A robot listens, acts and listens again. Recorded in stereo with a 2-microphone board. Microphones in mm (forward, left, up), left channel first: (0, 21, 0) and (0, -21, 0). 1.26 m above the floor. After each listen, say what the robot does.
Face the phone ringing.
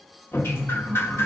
Keep listening.
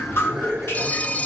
Turn 35° left.
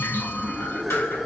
Keep listening.
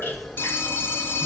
Turn 110° left.
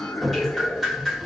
Keep listening.
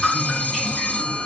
Turn 40° left.
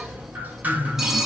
Turn 10° right.
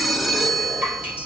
Found it: a phone ringing, straight ahead, under 1 m away.